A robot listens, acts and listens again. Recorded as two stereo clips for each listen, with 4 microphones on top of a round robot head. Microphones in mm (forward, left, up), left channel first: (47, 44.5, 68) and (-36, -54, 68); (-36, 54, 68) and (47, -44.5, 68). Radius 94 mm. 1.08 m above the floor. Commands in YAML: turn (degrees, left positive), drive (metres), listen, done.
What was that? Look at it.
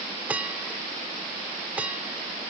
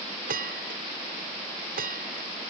turn: -50
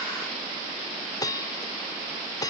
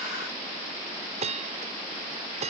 turn: -10
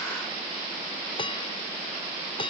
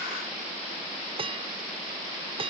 done: "Facing the bell."